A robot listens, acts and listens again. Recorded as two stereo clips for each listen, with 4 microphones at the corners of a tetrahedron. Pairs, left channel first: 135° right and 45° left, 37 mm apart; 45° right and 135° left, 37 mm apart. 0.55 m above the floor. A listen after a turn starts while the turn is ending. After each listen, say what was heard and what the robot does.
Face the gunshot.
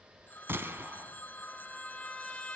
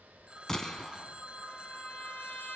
The gunshot: 30° left. Turn 30° left.
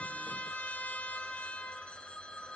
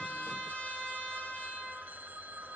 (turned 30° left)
Facing where the gunshot came from. I can't hear it now.